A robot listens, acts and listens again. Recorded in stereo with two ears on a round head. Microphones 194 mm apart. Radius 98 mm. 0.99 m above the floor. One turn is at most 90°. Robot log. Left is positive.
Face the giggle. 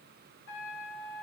cmd idle
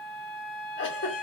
note: The giggle: about 55° left or 125° left.
cmd yaw +55
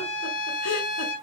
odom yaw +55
cmd idle
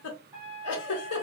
note: So it is at 70° left.
cmd yaw +70
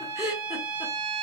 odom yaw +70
end: Facing the giggle, 1 to 2 m away.